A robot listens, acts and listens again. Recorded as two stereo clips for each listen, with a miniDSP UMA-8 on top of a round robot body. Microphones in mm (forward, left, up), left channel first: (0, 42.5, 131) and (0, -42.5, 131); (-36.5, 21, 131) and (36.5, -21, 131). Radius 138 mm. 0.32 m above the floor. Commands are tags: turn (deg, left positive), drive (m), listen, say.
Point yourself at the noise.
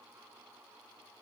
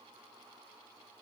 <listen/>
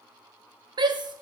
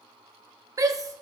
<turn deg="-70"/>
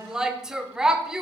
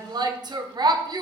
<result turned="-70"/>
<turn deg="-10"/>
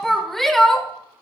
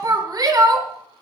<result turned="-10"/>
<say>Facing the shout, 1 to 2 m away.</say>